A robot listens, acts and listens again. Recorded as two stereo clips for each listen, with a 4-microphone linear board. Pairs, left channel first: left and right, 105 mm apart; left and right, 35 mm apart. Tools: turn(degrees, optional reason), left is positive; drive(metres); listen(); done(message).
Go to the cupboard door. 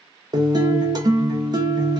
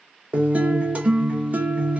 listen()
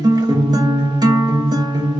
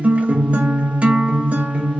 listen()
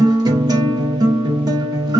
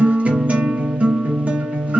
done("I can't make out a cupboard door, only a guitar.")